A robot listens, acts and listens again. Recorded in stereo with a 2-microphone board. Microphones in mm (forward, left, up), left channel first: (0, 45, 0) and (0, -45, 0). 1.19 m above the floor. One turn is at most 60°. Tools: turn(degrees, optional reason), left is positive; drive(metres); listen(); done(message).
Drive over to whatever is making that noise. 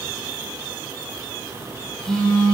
turn(degrees=30)
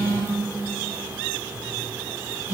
turn(degrees=-25, reason="So it is at 25° right.")
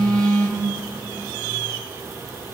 drive(metres=1.0)
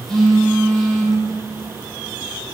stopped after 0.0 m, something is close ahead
done("Blocked. The phone buzzing is further on, straight ahead.")